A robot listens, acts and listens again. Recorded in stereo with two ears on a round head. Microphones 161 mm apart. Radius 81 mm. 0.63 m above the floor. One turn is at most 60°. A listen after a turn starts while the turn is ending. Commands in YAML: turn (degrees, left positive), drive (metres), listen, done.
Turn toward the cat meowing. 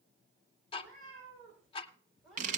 turn: 30
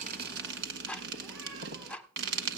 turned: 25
listen: true
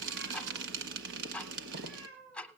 turn: -30
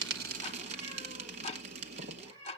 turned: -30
turn: 25
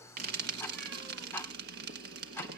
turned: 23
listen: true
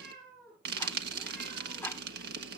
done: "Found it: a cat meowing, straight ahead, over 4 m away."